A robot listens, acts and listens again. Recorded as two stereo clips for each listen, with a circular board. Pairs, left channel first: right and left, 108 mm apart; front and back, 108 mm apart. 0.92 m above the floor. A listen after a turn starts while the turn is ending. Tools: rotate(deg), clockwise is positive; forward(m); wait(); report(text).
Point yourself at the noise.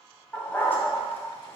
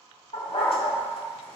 rotate(20)
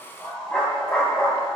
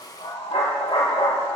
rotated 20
rotate(10)
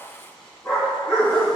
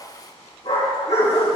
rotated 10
rotate(10)
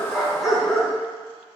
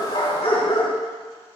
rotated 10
report("Facing the dog barking, over 4 m away.")